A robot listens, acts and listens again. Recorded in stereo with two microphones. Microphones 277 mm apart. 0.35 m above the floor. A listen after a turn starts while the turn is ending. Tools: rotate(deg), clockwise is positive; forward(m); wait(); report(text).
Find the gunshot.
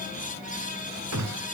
rotate(70)
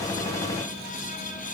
wait()
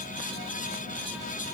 report("I heard a gunshot, but can't make it out now. It was about straight ahead or 40° right.")